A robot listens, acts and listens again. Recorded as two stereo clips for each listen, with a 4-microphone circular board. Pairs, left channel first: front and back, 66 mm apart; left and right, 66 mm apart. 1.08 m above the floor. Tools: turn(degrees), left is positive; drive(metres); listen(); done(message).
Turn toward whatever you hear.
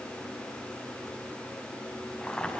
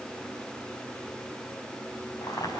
turn(degrees=75)
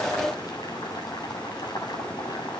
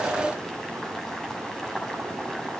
done("Found it: boiling, straight ahead, over 4 m away.")